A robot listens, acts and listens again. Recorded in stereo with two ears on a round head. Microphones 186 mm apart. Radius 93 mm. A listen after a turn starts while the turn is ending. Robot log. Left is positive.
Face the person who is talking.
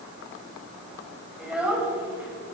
cmd yaw -30
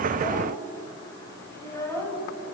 note: So it is at 15° left.
cmd yaw +15
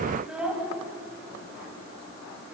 end: Facing the child speaking, over 4 m away.